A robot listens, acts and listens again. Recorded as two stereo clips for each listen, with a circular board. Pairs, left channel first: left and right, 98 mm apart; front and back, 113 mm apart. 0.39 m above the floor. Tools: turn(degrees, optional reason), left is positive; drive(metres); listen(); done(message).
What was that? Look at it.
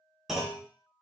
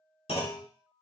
done("Facing the clunk, 1 to 2 m away.")